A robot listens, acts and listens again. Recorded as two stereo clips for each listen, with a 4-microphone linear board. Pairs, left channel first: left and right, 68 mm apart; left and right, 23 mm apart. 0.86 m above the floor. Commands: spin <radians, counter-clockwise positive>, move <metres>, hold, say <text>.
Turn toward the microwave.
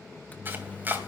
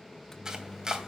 spin 0.44
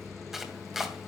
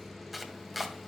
say Facing the microwave.